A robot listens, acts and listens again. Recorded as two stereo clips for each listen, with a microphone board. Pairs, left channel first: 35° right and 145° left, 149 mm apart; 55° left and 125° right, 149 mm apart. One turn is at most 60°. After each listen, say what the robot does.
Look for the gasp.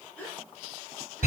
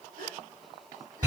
Turn 60° right.
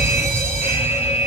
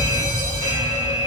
Turn 55° right.
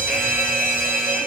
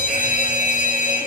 I heard a gasp from this way, but can't make it out now.